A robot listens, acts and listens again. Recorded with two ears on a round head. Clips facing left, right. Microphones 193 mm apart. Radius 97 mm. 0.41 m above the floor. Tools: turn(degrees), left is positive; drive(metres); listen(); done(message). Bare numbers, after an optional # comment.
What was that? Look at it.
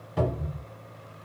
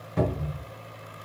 turn(30)
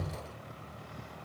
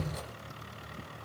# So it is at 30° right.
turn(-30)
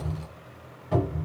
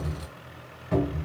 done("Facing the cupboard door, 1 to 2 m away.")